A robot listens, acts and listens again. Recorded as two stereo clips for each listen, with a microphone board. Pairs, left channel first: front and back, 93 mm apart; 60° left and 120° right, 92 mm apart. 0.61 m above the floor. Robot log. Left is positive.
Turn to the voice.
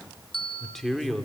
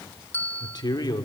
note: The man speaking: 85° left.
cmd yaw +85
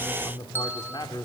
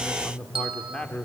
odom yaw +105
note: The man speaking is now 20° right.
cmd yaw -20
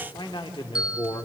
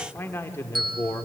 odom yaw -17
end: Found it: a man speaking, straight ahead, 1 to 2 m away.